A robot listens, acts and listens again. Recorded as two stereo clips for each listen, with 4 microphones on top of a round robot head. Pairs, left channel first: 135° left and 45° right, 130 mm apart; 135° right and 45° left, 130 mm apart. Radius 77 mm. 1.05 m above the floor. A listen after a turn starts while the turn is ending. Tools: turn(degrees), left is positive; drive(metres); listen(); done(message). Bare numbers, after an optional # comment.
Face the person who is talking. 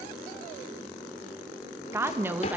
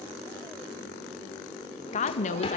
# The woman speaking: 120° right.
turn(-120)
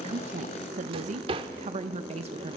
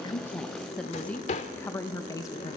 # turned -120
# The woman speaking is now 80° right.
turn(-80)
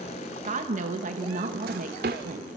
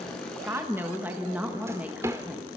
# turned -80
# The woman speaking is now 35° right.
turn(-35)
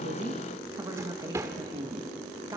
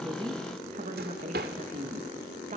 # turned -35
# The woman speaking is now 15° left.
turn(15)
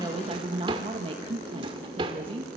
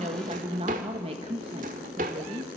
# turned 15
done("Facing the woman speaking.")